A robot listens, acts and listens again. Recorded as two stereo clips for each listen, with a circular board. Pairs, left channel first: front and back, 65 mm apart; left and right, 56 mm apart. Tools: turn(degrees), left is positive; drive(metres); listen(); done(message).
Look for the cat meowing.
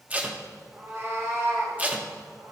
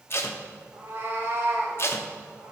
turn(degrees=-145)
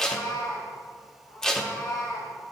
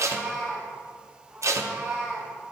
turn(degrees=-10)
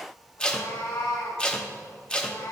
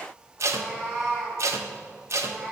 turn(degrees=-10)
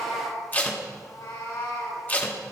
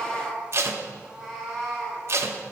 done("Found it: a cat meowing, straight ahead.")